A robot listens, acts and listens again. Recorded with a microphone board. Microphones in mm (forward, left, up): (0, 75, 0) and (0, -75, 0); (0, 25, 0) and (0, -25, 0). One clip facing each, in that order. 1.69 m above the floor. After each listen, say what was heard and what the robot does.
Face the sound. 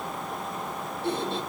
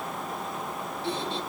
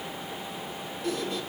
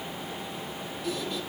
The squeak: about 50° left or 130° left. Turn 50° left.
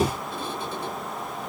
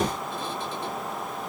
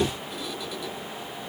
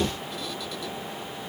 So it is at 10° left. Turn 10° left.
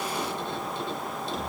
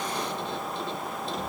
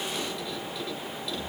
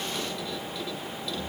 Facing the squeak, 1 to 2 m away.